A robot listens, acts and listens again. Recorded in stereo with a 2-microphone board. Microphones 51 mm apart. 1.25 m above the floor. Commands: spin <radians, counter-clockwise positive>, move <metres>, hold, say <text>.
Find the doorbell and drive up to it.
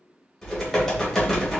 hold
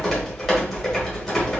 hold
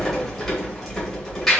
say I can't make out a doorbell, only typing on a keyboard.